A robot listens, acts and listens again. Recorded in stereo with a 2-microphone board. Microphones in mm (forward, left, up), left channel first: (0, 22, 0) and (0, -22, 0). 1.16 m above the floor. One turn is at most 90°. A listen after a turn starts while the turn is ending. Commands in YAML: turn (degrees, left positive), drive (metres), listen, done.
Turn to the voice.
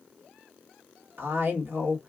turn: -55
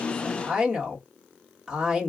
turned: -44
turn: -10
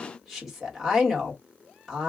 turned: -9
done: "Found it: a woman speaking, straight ahead, 1 to 2 m away."